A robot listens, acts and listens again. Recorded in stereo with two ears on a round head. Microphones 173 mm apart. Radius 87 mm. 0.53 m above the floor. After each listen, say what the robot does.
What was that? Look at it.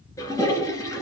Turn 15° left.
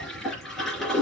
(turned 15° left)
Found it: a toilet flushing, straight ahead, 2 to 4 m away.